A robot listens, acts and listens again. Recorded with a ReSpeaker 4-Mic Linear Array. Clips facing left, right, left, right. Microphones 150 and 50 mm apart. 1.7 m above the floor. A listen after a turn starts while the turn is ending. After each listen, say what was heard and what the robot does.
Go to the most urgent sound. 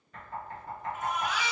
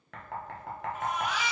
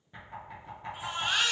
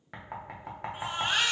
The baby crying: about 25° right or 155° right. Turn 25° right.
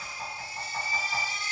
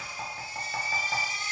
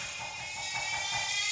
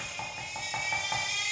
So it is at 130° right. Turn 130° right.
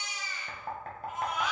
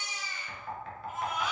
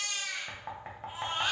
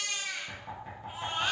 Drive 1.0 m forward.
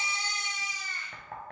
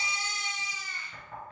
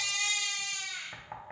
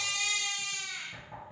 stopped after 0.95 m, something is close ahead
The baby crying is now 10° right. Turn 10° right.
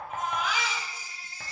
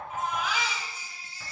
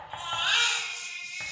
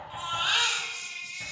Arrived at the baby crying, straight ahead.